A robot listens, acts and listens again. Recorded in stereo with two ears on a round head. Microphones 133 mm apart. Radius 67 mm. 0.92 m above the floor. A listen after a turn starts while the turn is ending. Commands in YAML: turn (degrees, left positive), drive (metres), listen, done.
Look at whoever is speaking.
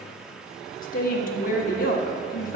turn: 65
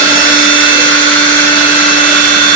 listen: true
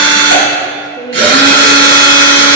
turn: 30
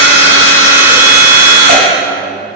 listen: true
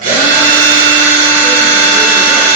listen: true
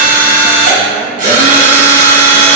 done: "Facing where the woman speaking came from. I can't hear it now."